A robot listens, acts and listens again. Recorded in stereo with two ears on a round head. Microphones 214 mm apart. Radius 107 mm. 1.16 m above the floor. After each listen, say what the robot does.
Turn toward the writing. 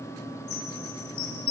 Keep listening.
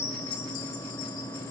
Keep listening.
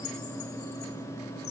I can't make out writing, only a chime.